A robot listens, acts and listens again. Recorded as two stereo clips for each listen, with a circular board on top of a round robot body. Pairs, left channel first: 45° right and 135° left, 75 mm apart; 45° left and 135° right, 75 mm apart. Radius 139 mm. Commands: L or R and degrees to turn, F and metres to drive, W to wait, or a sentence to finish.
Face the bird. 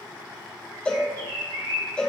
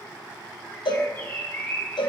L110
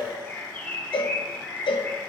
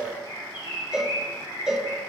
L25
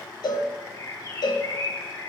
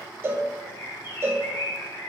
Found it: a bird, straight ahead, 1 to 2 m away.